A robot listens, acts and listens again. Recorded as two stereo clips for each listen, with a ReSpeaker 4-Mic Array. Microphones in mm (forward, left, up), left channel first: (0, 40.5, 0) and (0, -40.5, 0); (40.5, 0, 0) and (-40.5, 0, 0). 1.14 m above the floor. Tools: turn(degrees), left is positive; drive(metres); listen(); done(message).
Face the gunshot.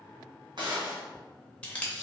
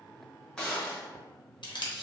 turn(degrees=-80)
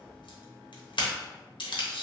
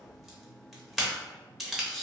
done("Facing where the gunshot came from. I can't hear it now.")